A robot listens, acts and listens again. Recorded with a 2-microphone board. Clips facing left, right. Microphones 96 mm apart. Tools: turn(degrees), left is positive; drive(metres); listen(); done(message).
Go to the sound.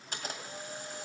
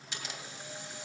turn(degrees=40)
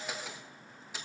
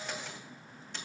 drive(metres=1.0)
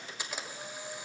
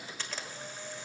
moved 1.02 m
turn(degrees=15)
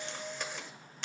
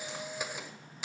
turn(degrees=-10)
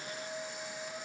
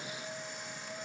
drive(metres=1.0)
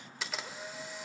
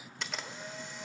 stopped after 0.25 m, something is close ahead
done("I am next to the camera shutter.")